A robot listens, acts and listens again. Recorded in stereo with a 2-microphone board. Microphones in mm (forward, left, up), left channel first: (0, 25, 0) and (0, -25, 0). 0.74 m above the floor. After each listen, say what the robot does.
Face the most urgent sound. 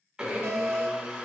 Turn 70° right.
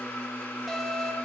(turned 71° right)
Facing the alarm.